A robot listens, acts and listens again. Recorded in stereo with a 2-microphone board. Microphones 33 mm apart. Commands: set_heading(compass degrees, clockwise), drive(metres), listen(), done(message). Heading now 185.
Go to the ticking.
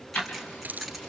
set_heading(125)
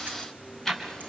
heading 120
drive(1.0)
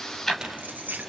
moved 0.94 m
drive(1.0)
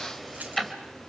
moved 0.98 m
drive(1.0)
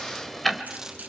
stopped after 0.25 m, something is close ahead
done("Arrived at the ticking, straight ahead.")